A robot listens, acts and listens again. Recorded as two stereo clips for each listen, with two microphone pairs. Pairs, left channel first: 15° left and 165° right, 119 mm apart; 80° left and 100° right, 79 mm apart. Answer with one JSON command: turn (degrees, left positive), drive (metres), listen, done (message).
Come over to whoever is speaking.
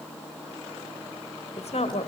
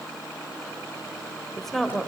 {"drive": 1.0}
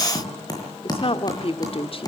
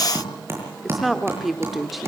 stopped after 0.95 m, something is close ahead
{"turn": -10}
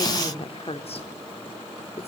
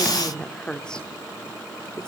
{"done": "I am next to the woman speaking."}